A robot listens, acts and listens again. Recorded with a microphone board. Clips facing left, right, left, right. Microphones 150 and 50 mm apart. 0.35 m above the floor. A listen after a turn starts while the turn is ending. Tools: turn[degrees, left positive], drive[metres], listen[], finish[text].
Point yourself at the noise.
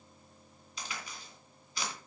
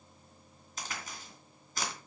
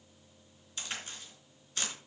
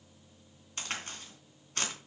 Thought: The crack: about 45° right or 135° right.
Action: turn[-45]
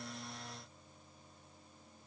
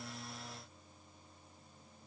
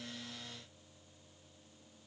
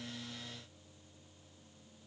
Action: listen[]
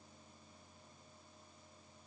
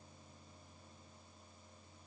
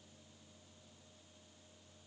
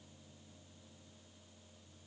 Action: finish[I heard a crack, but can't make it out now. It was about straight ahead or 90° right.]